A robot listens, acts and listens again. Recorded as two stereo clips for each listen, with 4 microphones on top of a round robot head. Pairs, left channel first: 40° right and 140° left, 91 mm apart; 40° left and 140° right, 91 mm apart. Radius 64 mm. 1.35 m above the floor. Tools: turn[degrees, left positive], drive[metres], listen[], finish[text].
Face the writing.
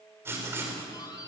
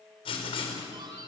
Thought: The writing: 70° left.
Action: turn[70]
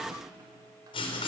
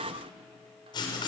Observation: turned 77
Action: finish[Facing the writing, over 4 m away.]